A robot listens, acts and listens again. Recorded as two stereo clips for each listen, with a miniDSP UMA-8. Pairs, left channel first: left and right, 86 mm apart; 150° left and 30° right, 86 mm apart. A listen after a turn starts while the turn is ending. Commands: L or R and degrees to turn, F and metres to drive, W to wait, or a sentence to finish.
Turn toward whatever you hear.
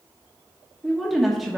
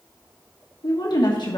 L180
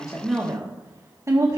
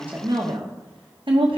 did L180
R35
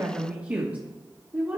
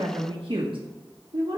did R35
R20
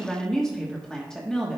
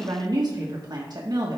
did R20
Found it: a woman speaking, straight ahead, 1 to 2 m away.